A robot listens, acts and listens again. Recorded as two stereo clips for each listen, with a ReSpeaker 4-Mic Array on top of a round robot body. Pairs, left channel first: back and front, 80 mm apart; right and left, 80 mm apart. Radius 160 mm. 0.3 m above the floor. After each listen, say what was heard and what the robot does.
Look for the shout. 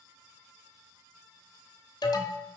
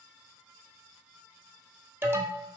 Keep listening.
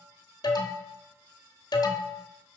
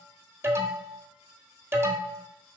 Keep listening.
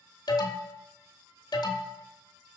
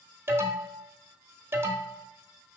I can't make out a shout, only an alarm.